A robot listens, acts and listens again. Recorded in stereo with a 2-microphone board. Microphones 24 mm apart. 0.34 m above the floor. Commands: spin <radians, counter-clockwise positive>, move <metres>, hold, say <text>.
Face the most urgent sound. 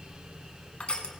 hold
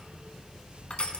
hold
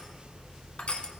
say I can't make out anything urgent to turn to.